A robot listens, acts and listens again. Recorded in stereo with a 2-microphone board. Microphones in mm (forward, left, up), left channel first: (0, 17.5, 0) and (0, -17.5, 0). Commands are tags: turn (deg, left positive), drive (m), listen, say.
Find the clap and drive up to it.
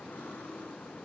<listen/>
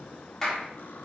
<turn deg="30"/>
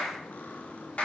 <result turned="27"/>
<turn deg="140"/>
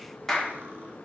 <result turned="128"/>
<turn deg="10"/>
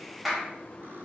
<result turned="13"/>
<drive m="1.0"/>
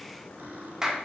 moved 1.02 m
<turn deg="-15"/>
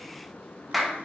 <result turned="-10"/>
<drive m="1.0"/>
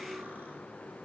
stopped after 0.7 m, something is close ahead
<listen/>
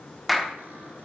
<say>Arrived at the clap, straight ahead.</say>